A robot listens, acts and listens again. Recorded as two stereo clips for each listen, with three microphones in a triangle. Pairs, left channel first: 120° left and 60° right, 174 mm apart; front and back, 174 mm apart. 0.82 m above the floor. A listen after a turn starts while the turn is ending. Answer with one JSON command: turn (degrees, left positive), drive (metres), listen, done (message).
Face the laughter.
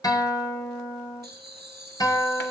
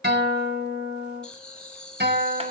{"turn": -85}
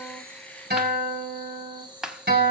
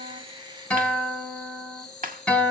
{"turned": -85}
{"done": "Facing the laughter."}